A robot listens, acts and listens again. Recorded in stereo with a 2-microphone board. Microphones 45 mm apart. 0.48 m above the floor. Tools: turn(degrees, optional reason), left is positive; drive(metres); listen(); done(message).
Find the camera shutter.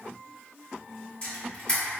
turn(degrees=25, reason="The camera shutter: about 25° left or 155° left.")
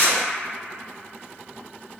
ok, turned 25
turn(degrees=125, reason="So it is at 125° left.")
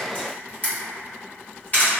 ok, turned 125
turn(degrees=40, reason="The camera shutter is now 40° left.")
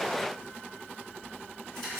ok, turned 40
listen()
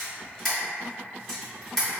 done("Facing the camera shutter, 1 to 2 m away.")